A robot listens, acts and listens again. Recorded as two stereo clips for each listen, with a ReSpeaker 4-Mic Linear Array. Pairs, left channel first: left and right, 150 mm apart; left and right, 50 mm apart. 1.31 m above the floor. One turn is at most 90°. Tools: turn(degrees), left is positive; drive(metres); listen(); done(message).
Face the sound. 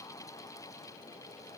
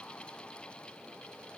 listen()
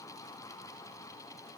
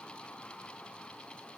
listen()
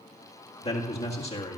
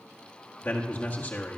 turn(degrees=40)
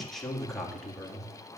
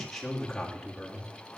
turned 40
done("Found it: a man speaking, straight ahead, 1 to 2 m away.")